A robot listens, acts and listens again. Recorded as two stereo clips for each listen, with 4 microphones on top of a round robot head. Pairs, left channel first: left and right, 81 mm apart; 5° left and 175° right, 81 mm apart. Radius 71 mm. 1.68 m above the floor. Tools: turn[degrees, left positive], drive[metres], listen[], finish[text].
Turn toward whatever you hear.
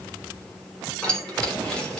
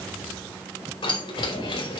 Thought: The keys jangling: 10° left.
Action: turn[10]
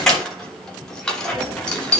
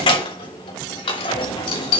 Thought: The keys jangling is now 10° left.
Action: turn[10]
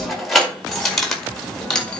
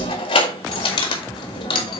Thought: The keys jangling is now 10° left.
Action: turn[10]
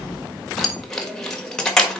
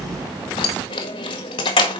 Thought: The keys jangling is now 10° left.
Action: turn[10]
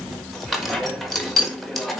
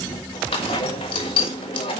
Action: finish[Facing the keys jangling, 1 to 2 m away.]